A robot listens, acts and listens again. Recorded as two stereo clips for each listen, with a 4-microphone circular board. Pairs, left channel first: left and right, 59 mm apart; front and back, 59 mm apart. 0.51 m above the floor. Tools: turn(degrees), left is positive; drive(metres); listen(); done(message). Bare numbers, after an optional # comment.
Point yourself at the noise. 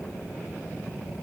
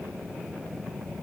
listen()
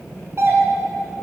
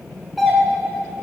# The doorbell: 95° right.
turn(-95)
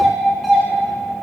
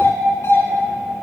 done("Found it: a doorbell, straight ahead.")